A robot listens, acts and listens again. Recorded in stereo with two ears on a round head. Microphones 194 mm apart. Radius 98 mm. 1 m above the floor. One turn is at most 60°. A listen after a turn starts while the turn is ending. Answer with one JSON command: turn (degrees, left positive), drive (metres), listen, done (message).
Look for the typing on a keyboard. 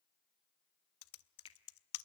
{"turn": 60}
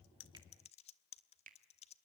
{"turn": 30}
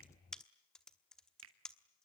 {"done": "Found it: typing on a keyboard, straight ahead, 1 to 2 m away."}